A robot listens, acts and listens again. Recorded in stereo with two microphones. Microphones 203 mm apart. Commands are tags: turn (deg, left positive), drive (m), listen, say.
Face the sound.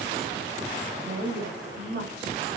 <turn deg="-55"/>
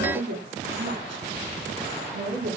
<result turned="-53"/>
<turn deg="-65"/>
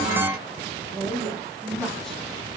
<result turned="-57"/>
<say>Facing the woman speaking, 2 to 4 m away.</say>